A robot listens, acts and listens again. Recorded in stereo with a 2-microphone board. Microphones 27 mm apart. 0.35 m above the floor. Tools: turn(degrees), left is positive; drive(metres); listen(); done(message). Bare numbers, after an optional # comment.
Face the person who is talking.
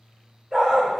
listen()
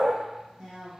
# The woman speaking: about 40° right or 140° right.
turn(-40)
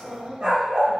# So it is at 85° right.
turn(-85)
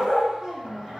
# The woman speaking is now 10° left.
turn(10)
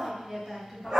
done("Facing the woman speaking, 1 to 2 m away.")